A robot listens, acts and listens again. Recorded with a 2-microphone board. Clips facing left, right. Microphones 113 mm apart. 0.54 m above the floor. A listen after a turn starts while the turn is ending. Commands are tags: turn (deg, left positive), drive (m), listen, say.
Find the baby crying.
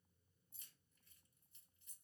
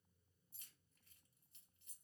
<listen/>
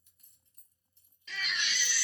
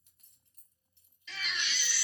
<turn deg="45"/>
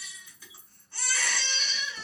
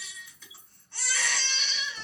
<say>Facing the baby crying, 1 to 2 m away.</say>